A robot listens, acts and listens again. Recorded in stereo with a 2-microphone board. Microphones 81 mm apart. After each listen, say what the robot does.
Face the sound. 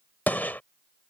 Turn 25° left.
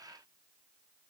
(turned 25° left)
Keep listening.
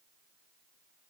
I heard a gunshot, but can't make it out now. It was about straight ahead or 130° left.